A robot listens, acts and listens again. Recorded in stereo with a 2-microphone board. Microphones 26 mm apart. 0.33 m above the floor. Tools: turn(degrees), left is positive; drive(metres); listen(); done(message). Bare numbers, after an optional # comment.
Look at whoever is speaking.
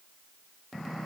listen()
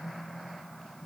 listen()
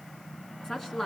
# The woman speaking: about 20° left or 160° left.
turn(20)
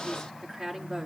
done("Found it: a woman speaking, straight ahead, 2 to 4 m away.")